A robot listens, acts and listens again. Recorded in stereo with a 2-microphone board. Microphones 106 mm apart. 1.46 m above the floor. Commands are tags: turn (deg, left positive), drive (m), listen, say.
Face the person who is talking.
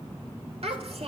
<turn deg="-75"/>
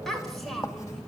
<say>Found it: a child speaking, straight ahead, over 4 m away.</say>